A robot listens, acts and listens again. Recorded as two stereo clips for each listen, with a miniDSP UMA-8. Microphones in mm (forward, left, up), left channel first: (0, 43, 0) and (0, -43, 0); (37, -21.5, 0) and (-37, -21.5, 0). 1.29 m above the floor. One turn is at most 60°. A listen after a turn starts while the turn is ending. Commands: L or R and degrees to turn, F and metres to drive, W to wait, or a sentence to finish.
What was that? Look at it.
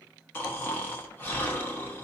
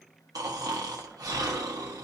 L60
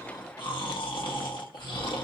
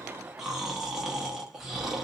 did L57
L60
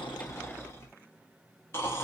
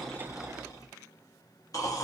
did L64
L30
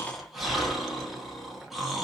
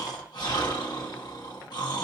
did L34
Facing the snoring.